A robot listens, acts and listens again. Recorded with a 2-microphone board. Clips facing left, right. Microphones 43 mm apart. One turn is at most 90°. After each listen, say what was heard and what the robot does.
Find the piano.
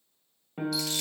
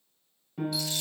The piano: about 35° left or 145° left. Turn 35° left.
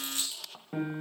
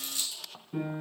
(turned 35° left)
So it is at 105° left. Turn 90° left.
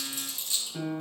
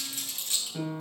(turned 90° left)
Found it: a piano, straight ahead, 1 to 2 m away.